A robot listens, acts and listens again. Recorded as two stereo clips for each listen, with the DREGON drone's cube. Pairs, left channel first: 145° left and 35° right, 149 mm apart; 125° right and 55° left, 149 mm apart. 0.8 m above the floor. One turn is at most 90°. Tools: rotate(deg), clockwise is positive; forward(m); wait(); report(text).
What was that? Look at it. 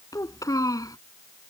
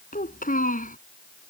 rotate(90)
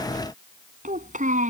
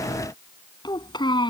rotate(65)
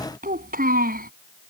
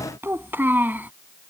rotate(20)
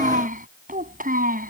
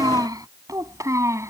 rotate(15)
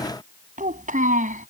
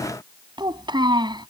report("Facing the child speaking.")